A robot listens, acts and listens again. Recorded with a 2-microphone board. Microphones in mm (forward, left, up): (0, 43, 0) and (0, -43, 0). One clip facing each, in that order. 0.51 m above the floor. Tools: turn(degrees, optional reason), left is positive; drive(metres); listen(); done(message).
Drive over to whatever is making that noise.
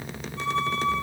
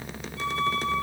turn(degrees=40, reason="The violin: about 40° left or 140° left.")
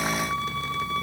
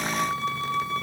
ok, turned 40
turn(degrees=100, reason="So it is at 100° left.")
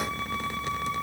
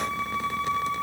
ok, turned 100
turn(degrees=10, reason="The violin is now 10° left.")
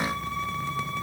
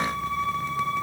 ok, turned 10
drive(metres=1.0)
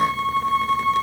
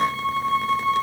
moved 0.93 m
drive(metres=1.0)
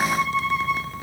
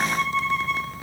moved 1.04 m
turn(degrees=10, reason="The violin is now 10° left.")
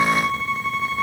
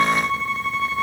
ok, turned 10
drive(metres=1.0)
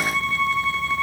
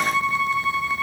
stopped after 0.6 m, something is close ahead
turn(degrees=-15, reason="The violin is now 15° right.")
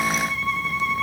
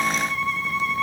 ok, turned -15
done("I am next to the violin.")